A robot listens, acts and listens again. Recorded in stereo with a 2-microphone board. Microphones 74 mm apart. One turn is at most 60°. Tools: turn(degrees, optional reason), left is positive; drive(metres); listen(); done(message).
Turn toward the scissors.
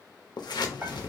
turn(degrees=60, reason="The scissors: about 75° left or 105° left.")
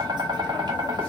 listen()
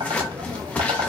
turn(degrees=20, reason="So it is at 20° left.")
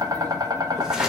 listen()
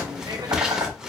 turn(degrees=-10, reason="The scissors is now 10° right.")
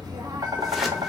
listen()
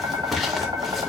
done("Found it: scissors, straight ahead.")